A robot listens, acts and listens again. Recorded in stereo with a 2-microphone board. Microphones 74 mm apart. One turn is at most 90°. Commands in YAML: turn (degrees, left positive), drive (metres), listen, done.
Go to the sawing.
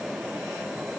listen: true
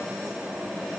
listen: true
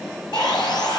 turn: 65
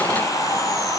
turn: 45
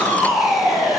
drive: 1.0
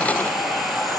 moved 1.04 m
drive: 1.0
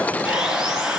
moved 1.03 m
turn: -10
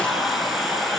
drive: 1.0
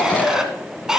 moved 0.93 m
drive: 1.0
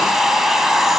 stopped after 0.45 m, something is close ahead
done: "Arrived at the sawing, straight ahead."